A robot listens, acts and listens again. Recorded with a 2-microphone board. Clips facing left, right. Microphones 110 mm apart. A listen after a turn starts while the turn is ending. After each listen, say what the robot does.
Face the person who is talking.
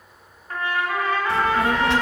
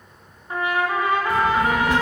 Turn 90° left.
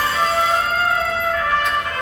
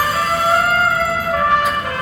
Keep listening.
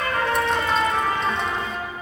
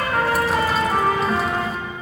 Keep listening.
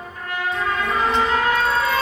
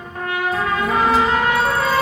I heard a child speaking from this way, but can't make it out now.